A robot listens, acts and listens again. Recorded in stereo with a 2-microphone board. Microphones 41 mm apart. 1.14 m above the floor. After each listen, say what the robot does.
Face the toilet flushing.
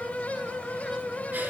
Keep listening.
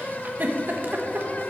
Keep listening.
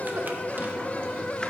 I can't make out a toilet flushing, only a giggle.